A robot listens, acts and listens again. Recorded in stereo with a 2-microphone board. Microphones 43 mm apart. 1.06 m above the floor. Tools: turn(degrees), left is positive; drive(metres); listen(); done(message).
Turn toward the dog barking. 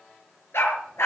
turn(degrees=90)
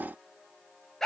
turn(degrees=10)
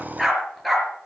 done("Facing the dog barking, over 4 m away.")